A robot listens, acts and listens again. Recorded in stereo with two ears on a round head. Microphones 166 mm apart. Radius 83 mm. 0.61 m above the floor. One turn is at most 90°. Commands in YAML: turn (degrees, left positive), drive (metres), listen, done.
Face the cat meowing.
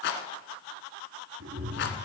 turn: -70
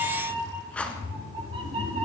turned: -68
turn: -35
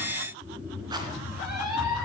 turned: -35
turn: -25
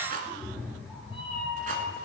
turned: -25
done: "Facing the cat meowing, 2 to 4 m away."